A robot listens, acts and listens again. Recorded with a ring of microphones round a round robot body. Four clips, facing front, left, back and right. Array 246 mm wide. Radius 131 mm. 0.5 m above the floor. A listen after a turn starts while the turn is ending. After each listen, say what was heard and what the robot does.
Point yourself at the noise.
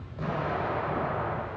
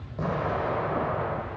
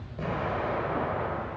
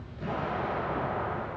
The explosion: 110° left. Turn 110° left.
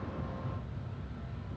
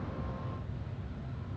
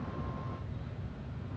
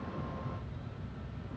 I heard an explosion from this way, but can't make it out now.